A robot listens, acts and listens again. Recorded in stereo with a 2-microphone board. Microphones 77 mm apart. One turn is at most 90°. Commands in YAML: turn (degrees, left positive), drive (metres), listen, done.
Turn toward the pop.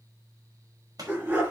turn: -55
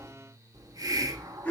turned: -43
listen: true
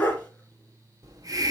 done: "I heard a pop, but can't make it out now. It was about 15° right or 80° right."